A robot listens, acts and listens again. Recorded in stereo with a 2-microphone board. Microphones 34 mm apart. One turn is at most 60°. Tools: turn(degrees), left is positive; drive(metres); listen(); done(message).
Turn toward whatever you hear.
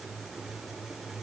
listen()
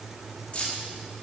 turn(degrees=40)
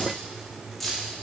done("Found it: keys jangling, straight ahead, 1 to 2 m away.")